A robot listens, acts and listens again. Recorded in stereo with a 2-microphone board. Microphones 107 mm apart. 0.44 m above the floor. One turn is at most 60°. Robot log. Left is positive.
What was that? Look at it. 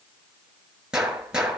cmd yaw -30
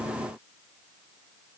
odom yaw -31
cmd idle
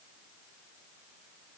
end: I heard a gunshot, but can't make it out now. It was about 25° left or 140° right.